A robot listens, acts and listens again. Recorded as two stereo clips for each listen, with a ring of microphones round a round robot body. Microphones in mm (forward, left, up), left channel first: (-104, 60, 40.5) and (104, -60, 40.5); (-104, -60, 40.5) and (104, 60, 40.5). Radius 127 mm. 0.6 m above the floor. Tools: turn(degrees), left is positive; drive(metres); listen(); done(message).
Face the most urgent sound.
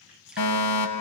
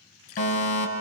turn(degrees=150)
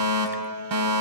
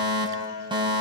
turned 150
turn(degrees=-40)
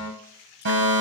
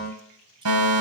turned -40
turn(degrees=10)
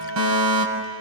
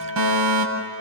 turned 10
done("Facing the fire alarm, over 4 m away.")